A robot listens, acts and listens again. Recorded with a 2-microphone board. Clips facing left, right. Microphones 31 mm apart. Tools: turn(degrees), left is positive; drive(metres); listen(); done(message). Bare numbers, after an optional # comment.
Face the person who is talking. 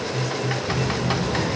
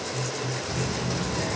turn(30)
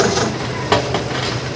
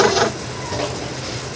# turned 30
listen()
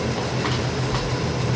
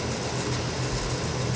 # So it is at 145° left.
turn(145)
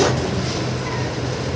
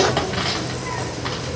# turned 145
done("Found it: a child speaking, straight ahead.")